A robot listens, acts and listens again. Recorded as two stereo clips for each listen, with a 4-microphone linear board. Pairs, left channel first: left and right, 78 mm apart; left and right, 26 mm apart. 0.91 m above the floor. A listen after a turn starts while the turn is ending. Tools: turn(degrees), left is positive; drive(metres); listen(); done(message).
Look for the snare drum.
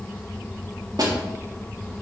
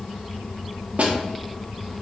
turn(degrees=-50)
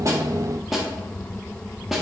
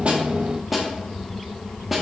done("Facing the snare drum, 1 to 2 m away.")